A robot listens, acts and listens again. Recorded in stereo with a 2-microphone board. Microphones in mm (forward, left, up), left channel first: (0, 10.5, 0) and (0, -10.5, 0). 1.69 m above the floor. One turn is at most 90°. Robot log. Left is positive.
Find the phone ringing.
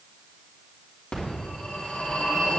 note: The phone ringing: about 65° left or 115° left.
cmd yaw +65
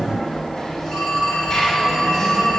end: Found it: a phone ringing, straight ahead, 2 to 4 m away.